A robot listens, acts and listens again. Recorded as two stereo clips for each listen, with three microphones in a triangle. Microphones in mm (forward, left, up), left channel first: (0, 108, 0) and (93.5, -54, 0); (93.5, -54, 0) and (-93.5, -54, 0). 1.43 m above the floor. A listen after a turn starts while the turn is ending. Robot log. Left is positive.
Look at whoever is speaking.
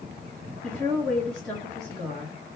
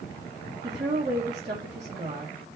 note: The woman speaking: 155° right.
cmd yaw -155
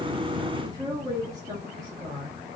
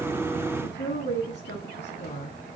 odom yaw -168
note: The woman speaking is now 10° left.
cmd yaw +10
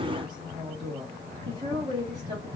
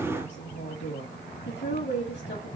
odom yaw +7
end: Found it: a woman speaking, straight ahead.